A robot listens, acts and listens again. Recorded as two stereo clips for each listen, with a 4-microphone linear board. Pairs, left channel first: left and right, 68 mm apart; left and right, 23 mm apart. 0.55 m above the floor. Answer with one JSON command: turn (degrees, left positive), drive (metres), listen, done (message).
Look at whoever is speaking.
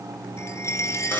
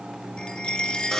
{"listen": true}
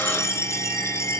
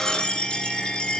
{"listen": true}
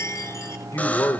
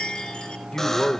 {"turn": 50}
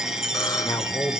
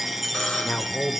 {"turn": 70}
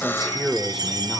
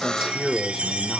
{"done": "Facing the man speaking, 1 to 2 m away."}